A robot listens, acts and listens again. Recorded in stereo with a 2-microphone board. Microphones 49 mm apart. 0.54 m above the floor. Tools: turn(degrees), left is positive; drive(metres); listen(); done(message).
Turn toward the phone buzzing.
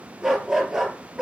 listen()
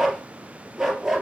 listen()
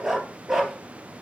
done("I can't make out a phone buzzing to turn to.")